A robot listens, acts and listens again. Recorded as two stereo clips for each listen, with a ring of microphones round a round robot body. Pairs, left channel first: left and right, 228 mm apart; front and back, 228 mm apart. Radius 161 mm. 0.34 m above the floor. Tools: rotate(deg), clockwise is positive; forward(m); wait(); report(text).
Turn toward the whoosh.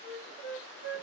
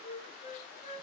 wait()
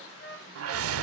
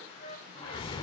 rotate(75)
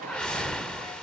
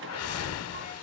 report("Facing the whoosh.")